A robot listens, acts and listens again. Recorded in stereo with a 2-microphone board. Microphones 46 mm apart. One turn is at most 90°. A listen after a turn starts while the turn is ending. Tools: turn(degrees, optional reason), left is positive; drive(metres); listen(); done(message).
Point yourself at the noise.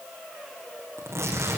turn(degrees=-90)
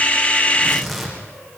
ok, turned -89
done("Found it: tearing paper, straight ahead.")